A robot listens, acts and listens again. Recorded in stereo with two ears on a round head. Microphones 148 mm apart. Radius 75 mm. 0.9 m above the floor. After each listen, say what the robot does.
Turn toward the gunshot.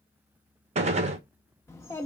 Turn 45° right.
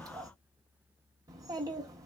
Keep listening.
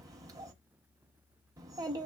I heard a gunshot, but can't make it out now. It was about straight ahead or 90° right.